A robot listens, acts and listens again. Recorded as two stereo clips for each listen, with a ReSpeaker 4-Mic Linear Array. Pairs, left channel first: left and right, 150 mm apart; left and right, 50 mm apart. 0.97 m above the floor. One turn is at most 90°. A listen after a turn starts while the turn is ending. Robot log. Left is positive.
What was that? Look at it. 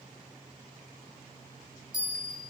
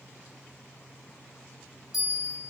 cmd yaw -30
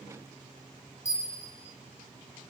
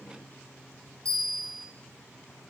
note: So it is at 25° left.
cmd yaw +25
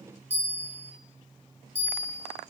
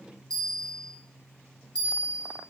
note: The bell is now 15° left.
cmd yaw +15
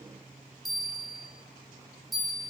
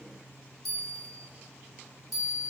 end: Facing the bell.